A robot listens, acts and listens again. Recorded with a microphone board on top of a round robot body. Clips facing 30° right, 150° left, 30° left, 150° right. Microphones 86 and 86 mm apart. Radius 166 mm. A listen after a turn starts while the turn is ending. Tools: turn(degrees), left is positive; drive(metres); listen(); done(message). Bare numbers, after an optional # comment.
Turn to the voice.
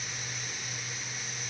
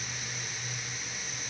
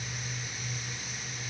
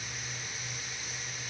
listen()
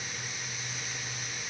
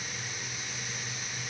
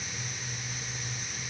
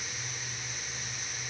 listen()
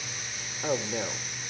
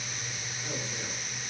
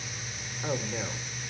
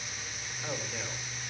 # The man speaking: 45° right.
turn(-45)
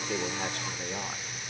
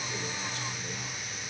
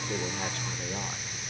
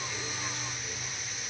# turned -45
listen()
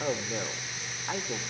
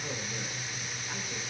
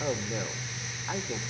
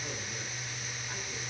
done("Facing the man speaking.")